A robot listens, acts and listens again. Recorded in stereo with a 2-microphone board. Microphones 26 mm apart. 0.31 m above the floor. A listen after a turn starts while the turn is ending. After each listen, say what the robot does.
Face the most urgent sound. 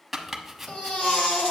Turn 55° left.
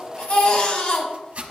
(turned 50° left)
Turn 60° left.
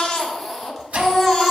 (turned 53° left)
Found it: a baby crying, straight ahead, 1 to 2 m away.